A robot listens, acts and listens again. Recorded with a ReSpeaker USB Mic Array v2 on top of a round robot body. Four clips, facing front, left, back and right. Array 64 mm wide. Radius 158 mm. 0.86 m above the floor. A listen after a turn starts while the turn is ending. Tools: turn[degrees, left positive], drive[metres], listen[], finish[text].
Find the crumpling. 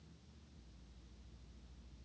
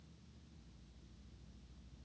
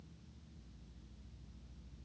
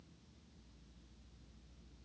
Action: listen[]
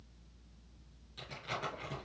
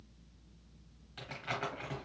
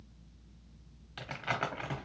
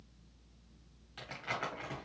Thought: The crumpling: straight behind.
Action: turn[180]
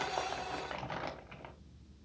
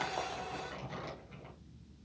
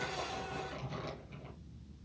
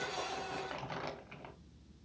Thought: The crumpling is now 30° right.
Action: turn[-30]
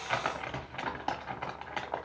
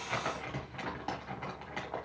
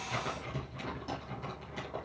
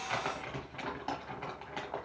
Action: finish[Found it: crumpling, straight ahead.]